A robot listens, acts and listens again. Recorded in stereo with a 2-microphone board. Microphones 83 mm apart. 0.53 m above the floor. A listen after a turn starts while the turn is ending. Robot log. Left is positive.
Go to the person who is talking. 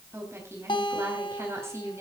note: The woman speaking: about 35° right or 145° right.
cmd yaw -35
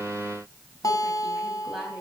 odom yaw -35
cmd idle
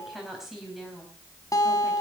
cmd fwd 1.0
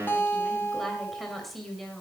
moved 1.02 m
cmd fwd 1.0
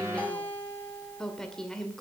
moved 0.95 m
note: The woman speaking is now 10° left.
cmd yaw +10
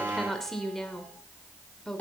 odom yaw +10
cmd fwd 1.0
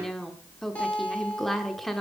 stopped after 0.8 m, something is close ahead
end: I am next to the woman speaking.